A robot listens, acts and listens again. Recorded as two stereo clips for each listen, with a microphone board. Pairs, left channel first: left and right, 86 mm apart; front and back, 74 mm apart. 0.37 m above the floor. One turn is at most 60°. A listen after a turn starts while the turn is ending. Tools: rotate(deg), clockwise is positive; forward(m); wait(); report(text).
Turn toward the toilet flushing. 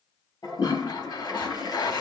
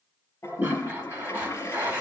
rotate(-50)
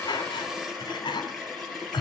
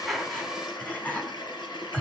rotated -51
report("Found it: a toilet flushing, straight ahead.")